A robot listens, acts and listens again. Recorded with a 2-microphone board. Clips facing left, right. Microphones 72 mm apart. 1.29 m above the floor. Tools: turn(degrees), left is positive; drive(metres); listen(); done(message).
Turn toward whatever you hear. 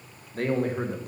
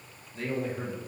turn(degrees=55)
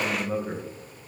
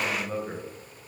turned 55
done("Facing the man speaking, 1 to 2 m away.")